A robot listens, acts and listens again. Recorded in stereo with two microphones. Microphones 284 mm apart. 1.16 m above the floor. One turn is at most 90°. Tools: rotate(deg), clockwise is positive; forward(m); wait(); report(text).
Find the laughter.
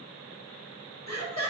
rotate(-70)
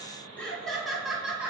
report("Found it: laughter, straight ahead.")